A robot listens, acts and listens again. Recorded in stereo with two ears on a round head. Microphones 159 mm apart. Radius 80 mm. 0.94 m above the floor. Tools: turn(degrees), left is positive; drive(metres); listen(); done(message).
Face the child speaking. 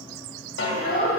turn(degrees=40)
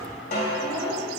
done("Facing the child speaking, 2 to 4 m away.")